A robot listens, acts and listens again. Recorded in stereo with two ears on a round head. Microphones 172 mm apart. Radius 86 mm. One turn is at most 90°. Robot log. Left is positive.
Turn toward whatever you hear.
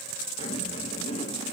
note: The zipper: about 35° left or 145° left.
cmd yaw +35
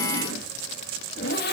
note: So it is at 105° left.
cmd yaw +90
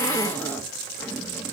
note: The zipper is now 10° left.
cmd yaw +10
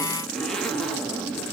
end: Found it: a zipper, straight ahead.